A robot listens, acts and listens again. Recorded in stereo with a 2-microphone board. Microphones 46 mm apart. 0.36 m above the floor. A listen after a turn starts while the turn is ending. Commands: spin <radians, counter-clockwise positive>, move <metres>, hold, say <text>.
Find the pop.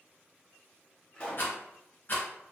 spin 0.52
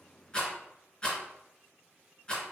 hold
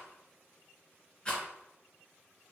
say I heard a pop, but can't make it out now. It was about straight ahead or 120° left.